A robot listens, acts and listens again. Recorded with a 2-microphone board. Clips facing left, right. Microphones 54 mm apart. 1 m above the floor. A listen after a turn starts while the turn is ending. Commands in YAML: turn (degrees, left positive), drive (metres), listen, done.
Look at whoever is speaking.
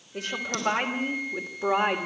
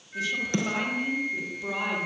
turn: 75
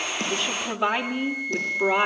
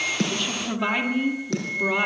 turn: 15
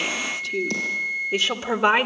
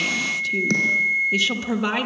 turn: 25
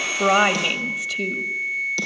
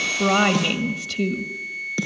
done: "Facing the woman speaking."